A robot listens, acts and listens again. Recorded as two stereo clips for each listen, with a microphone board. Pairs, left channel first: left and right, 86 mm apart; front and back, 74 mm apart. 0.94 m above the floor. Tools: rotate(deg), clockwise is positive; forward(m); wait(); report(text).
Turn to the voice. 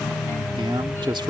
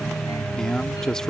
rotate(80)
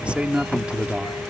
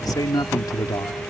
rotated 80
rotate(15)
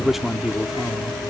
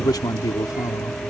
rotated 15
report("Facing the man speaking.")